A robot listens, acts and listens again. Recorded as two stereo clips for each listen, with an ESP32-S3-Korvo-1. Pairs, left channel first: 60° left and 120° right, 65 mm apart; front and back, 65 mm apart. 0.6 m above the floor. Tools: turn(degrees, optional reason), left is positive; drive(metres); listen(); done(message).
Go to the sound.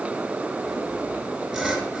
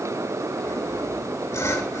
turn(degrees=-30, reason="The sawing: 30° right.")
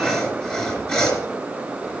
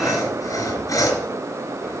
turn(degrees=-10, reason="The sawing is now 10° right.")
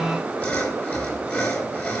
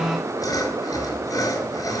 drive(metres=1.0)
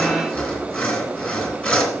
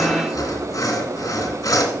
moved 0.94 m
drive(metres=1.0)
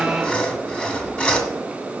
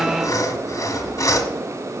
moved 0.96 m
turn(degrees=-10, reason="The sawing is now 10° right.")
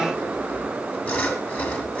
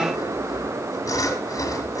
drive(metres=1.0)
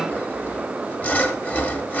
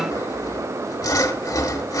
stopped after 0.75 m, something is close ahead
done("I am next to the sawing.")